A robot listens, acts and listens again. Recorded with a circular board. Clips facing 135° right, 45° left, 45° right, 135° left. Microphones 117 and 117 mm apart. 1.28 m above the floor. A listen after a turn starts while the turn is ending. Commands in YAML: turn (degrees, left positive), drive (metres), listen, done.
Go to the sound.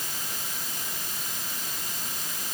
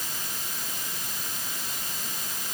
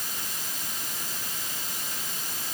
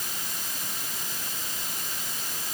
listen: true
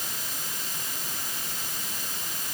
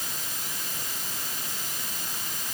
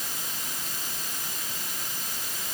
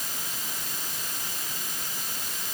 listen: true
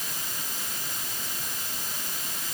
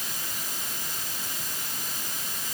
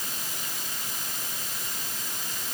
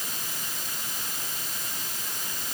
done: "I can't make out anything to turn to."